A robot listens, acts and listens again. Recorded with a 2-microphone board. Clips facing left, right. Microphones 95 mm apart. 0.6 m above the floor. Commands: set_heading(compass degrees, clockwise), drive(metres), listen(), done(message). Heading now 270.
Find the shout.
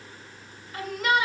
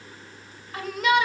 set_heading(0)
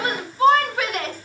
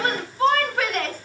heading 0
set_heading(350)
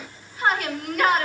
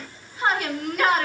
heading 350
done("Facing the shout.")